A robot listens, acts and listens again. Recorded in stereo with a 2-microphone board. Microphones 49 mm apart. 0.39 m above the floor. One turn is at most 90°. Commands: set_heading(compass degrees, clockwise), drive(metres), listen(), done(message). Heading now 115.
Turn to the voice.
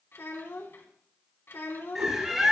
set_heading(55)
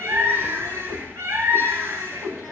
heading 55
listen()
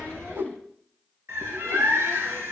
listen()
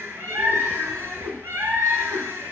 done("I heard a child speaking, but can't make it out now. It was about straight ahead or 60° left.")